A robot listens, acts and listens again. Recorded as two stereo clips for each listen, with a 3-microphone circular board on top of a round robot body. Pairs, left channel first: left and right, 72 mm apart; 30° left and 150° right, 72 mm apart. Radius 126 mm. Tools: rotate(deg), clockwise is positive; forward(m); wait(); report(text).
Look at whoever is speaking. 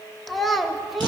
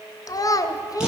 report("Facing the child speaking, under 1 m away.")